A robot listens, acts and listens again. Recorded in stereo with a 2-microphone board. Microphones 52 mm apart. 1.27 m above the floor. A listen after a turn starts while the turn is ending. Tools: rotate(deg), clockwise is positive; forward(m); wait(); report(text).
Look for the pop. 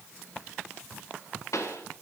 rotate(-65)
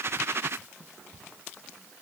wait()
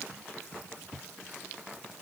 report("I heard a pop, but can't make it out now. It was about straight ahead or 50° left.")